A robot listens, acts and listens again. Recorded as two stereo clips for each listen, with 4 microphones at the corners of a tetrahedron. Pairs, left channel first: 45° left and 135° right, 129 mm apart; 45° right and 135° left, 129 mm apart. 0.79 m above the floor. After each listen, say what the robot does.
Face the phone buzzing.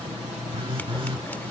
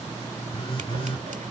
Turn 90° right.
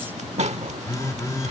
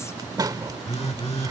Turn 15° right.
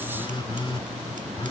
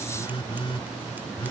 Facing the phone buzzing.